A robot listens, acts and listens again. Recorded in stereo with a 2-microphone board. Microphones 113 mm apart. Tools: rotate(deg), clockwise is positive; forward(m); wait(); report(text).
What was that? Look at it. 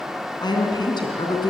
rotate(-40)
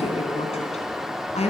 rotate(-100)
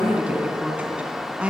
rotate(10)
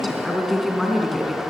report("Found it: a woman speaking, straight ahead.")